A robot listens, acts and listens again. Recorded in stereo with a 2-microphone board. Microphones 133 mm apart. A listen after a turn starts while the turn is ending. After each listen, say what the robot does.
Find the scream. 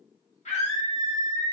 Turn 55° left.
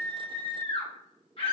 Turn 50° left.
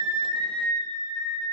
Facing the scream, 1 to 2 m away.